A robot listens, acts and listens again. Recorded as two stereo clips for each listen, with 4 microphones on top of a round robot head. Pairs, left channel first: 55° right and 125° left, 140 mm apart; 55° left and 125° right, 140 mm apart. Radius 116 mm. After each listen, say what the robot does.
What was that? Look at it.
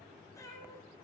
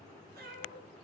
Turn 120° right.
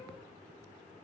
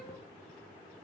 Keep listening.
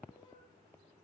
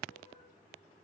Turn 10° left.
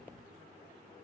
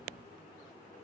Keep listening.
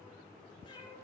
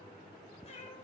Facing the cat meowing, over 4 m away.